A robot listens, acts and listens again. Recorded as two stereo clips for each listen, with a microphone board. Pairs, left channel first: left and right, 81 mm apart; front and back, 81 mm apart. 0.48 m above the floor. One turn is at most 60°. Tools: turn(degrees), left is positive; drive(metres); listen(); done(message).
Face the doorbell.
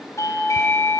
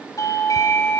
turn(degrees=45)
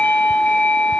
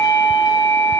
turn(degrees=20)
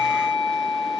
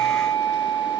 done("Found it: a doorbell, straight ahead, over 4 m away.")